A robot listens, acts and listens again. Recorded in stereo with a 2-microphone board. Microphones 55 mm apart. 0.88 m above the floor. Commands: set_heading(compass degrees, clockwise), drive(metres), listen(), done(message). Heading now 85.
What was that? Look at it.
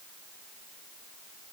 listen()
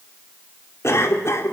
set_heading(30)
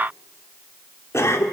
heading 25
set_heading(325)
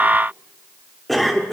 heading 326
done("Found it: a cough, straight ahead, 2 to 4 m away.")